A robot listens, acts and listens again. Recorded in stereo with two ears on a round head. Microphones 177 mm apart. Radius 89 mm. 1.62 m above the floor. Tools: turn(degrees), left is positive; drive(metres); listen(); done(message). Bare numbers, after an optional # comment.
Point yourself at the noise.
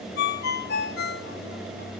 # The ringtone: about 55° left or 125° left.
turn(55)
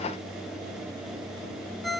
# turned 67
done("Found it: a ringtone, straight ahead.")